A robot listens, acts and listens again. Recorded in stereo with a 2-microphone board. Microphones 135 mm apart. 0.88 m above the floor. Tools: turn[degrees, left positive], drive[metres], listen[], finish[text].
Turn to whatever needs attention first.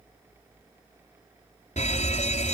Thought: The fire alarm: about 60° left or 120° left.
Action: turn[60]
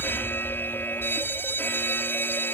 Thought: So it is at 20° left.
Action: turn[20]
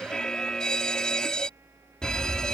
Action: finish[Found it: a fire alarm, straight ahead.]